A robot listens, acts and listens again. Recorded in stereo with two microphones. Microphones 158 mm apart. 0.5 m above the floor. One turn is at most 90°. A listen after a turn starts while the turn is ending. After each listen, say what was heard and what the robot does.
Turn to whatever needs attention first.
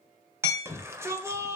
The shout: about 15° right or 165° right. Turn 15° right.
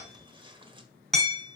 Keep listening.
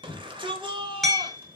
So it is at 150° right. Turn 90° right.
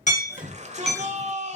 The shout is now 50° right. Turn 50° right.
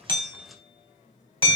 Keep listening.
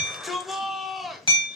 Found it: a shout, straight ahead.